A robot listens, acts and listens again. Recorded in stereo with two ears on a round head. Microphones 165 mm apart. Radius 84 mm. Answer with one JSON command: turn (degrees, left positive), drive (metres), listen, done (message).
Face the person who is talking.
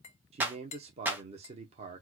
{"turn": -35}
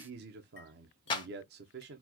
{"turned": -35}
{"turn": -105}
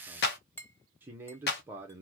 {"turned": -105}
{"turn": -10}
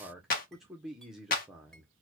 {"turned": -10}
{"done": "Found it: a man speaking, straight ahead."}